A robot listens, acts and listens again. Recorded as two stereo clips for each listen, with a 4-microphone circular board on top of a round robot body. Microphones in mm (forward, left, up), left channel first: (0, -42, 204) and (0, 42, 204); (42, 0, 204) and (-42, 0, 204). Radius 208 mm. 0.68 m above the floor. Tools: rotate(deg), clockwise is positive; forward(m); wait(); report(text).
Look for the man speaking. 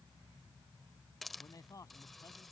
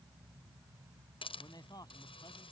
rotate(40)
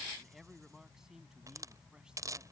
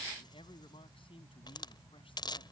report("Found it: a man speaking, straight ahead.")